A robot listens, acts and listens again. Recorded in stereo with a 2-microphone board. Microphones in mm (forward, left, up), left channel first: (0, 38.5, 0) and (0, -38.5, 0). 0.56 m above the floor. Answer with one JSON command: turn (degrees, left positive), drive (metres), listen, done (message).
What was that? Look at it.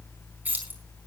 {"turn": -20}
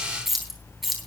{"turn": -30}
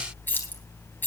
{"turn": 25}
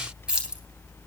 {"turn": -10}
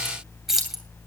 {"done": "Found it: keys jangling, straight ahead, 2 to 4 m away."}